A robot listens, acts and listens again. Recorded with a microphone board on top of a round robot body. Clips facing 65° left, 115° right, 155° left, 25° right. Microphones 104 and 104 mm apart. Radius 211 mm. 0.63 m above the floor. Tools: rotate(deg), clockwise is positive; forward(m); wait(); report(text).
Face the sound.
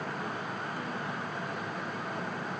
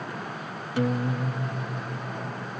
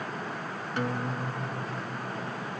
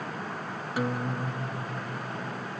rotate(105)
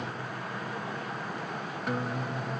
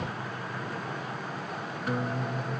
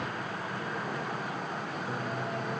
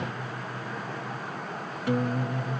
rotate(25)
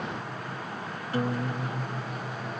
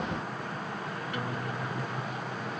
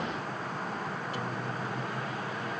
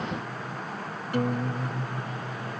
rotate(-10)
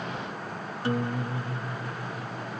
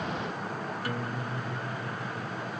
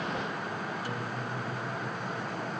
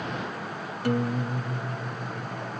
report("Found it: a guitar, straight ahead.")